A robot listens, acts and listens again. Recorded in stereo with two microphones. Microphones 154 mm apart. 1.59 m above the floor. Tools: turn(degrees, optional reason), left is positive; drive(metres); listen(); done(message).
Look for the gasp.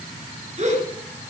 turn(degrees=-45, reason="The gasp: about 45° right or 135° right.")
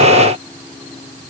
listen()
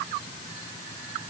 done("I heard a gasp, but can't make it out now. It was about straight ahead or 90° right.")